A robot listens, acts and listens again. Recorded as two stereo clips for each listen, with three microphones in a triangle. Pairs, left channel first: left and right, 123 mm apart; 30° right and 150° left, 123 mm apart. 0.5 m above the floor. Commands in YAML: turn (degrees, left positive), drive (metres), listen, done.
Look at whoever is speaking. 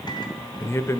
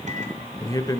turn: 25
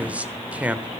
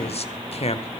turn: -15
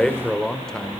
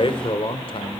done: "Found it: a man speaking, straight ahead, 1 to 2 m away."